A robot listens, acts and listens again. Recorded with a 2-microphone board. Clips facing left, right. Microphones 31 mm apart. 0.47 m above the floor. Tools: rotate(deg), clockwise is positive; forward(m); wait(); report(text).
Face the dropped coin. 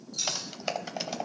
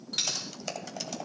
rotate(90)
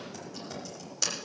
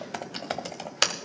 report("I heard a dropped coin from this way, but can't make it out now.")